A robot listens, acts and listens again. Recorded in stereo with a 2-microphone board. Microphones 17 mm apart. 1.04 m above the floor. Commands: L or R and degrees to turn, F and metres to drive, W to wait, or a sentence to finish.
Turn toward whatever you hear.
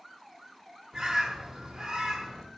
R45
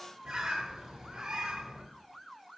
R75
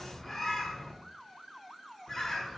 L20
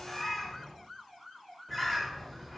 Found it: a bird, straight ahead, under 1 m away.